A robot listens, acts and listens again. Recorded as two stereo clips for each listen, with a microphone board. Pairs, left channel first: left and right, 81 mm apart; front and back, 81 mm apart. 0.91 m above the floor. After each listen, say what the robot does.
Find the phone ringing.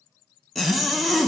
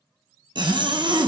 Keep listening.
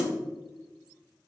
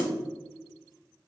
Keep listening.
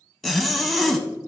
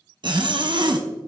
I can't make out a phone ringing to turn to.